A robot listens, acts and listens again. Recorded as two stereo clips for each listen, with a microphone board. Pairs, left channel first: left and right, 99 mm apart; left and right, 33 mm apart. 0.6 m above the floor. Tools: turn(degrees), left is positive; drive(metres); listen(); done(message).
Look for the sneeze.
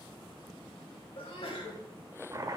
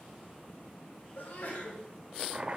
turn(degrees=65)
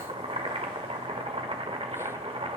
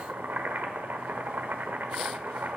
listen()
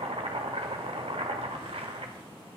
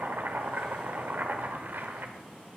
done("I heard a sneeze, but can't make it out now. It was about straight ahead or 50° left.")